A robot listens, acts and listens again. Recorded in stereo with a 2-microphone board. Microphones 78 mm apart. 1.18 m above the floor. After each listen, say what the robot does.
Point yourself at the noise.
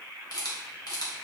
Turn 60° left.
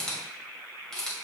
Turn 10° left.
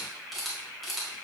Found it: a camera shutter, straight ahead, 2 to 4 m away.